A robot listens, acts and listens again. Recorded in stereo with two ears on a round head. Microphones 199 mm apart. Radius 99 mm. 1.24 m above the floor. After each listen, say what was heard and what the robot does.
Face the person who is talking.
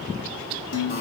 Keep listening.
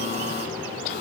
Keep listening.
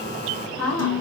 Turn 30° left.
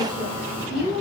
So it is at 25° right. Turn 25° right.
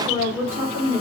The woman speaking is now 10° right. Turn 10° right.
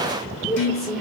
Facing the woman speaking, 2 to 4 m away.